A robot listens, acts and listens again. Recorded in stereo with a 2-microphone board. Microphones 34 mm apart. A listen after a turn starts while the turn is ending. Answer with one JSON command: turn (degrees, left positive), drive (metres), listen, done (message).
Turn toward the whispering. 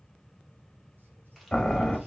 {"listen": true}
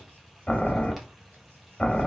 {"listen": true}
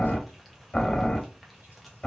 {"done": "I can't make out whispering, only boiling."}